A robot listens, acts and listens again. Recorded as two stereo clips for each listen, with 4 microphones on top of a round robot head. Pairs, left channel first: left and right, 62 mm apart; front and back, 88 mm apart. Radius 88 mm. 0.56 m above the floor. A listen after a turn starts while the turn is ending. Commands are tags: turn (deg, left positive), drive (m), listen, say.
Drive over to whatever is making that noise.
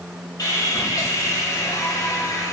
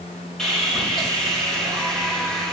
<turn deg="85"/>
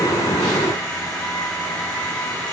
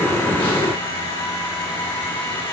<turn deg="20"/>
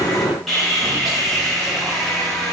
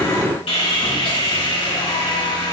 <drive m="1.0"/>
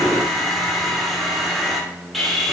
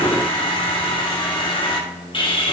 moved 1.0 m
<drive m="1.0"/>
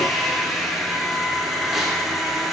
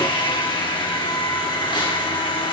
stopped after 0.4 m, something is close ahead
<say>I am next to the sawing.</say>